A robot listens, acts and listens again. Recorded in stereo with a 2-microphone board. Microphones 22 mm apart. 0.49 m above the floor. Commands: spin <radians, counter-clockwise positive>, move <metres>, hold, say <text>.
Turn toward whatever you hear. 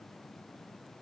hold
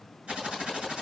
spin -1.22
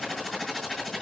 say Found it: typing on a keyboard, straight ahead.